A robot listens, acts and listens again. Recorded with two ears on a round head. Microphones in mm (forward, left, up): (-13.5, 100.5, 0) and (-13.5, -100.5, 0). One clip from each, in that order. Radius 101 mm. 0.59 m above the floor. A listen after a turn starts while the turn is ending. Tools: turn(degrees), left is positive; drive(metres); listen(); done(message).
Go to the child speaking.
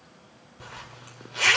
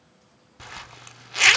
listen()
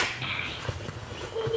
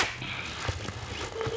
turn(degrees=30)
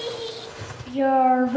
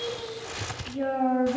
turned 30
turn(degrees=145)
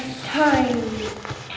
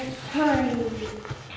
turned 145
turn(degrees=30)
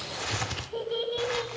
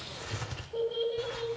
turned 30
turn(degrees=15)
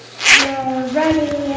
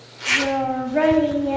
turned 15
drive(metres=1.0)
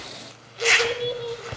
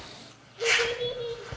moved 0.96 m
drive(metres=1.0)
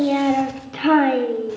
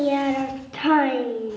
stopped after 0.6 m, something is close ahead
turn(degrees=-10)
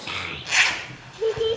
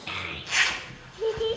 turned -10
done("I am next to the child speaking.")